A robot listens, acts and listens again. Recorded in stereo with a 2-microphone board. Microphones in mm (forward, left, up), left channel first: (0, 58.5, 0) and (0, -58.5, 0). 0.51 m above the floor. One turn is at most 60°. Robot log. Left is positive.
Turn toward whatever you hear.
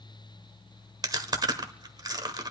note: The chewing: about 35° right or 145° right.
cmd yaw -35
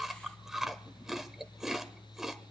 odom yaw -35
end: Facing the chewing, 1 to 2 m away.